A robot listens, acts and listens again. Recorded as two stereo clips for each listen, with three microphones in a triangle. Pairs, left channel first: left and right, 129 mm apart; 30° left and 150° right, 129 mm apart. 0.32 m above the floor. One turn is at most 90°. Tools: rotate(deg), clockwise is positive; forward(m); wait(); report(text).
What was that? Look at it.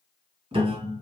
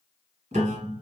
rotate(90)
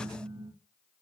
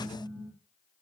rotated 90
rotate(45)
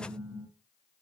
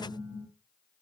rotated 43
report("Facing the piano, 1 to 2 m away.")